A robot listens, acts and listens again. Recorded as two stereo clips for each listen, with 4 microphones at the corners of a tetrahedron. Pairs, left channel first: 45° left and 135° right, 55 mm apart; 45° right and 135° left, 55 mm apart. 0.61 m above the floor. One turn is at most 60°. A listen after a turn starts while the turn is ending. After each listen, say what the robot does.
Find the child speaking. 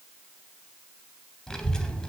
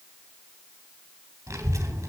Turn 60° left.
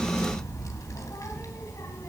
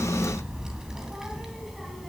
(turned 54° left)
Turn 50° left.
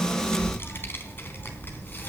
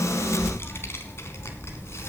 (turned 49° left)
Turn 10° right.
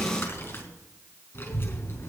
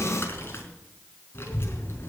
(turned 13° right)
Found it: a child speaking, straight ahead.